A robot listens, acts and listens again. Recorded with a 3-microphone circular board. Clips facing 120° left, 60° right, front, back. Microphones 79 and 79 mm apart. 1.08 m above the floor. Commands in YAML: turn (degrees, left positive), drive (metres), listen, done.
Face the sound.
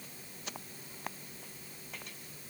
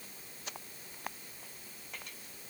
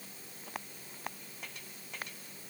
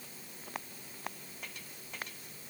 listen: true
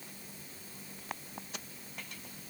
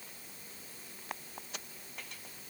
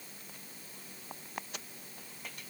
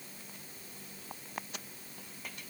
listen: true
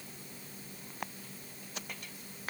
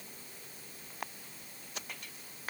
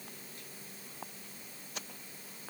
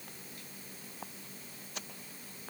done: "I can't make out anything to turn to."